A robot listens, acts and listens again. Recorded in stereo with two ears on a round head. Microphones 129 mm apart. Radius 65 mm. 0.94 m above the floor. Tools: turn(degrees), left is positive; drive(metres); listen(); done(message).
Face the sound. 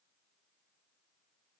listen()
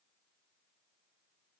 listen()
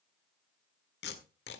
turn(degrees=90)
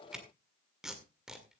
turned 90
done("Facing the tape being pulled, 1 to 2 m away.")